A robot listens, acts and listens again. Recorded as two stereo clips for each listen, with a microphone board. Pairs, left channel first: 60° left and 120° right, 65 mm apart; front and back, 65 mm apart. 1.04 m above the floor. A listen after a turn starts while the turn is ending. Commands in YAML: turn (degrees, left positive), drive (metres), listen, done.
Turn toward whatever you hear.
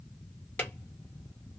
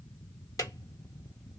done: "Facing the drawer."